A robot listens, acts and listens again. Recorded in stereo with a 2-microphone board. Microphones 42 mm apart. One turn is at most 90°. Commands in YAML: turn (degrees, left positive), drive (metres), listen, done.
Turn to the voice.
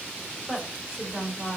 turn: -40
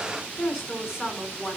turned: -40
turn: -10
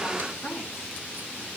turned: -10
done: "Found it: a woman speaking, straight ahead, over 4 m away."